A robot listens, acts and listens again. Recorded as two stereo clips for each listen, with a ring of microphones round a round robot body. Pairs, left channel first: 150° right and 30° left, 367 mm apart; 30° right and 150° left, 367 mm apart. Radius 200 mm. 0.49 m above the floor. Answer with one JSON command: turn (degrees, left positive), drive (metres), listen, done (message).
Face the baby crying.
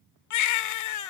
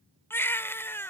{"turn": -115}
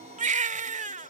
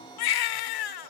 {"turn": -40}
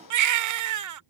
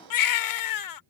{"done": "Facing the baby crying."}